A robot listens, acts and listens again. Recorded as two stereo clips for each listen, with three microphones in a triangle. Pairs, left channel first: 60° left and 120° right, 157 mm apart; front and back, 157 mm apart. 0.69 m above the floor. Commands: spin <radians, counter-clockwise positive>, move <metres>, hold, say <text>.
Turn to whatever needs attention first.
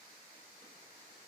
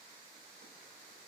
hold
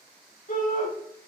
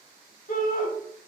spin 0.52
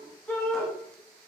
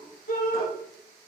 spin -0.35
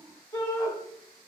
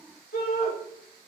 say Found it: a shout, straight ahead, 2 to 4 m away.